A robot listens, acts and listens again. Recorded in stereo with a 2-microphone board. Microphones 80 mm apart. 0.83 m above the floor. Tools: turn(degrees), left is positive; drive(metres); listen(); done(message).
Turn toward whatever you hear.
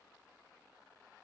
listen()
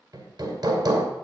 turn(degrees=-55)
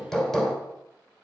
done("Found it: hammering, straight ahead, 1 to 2 m away.")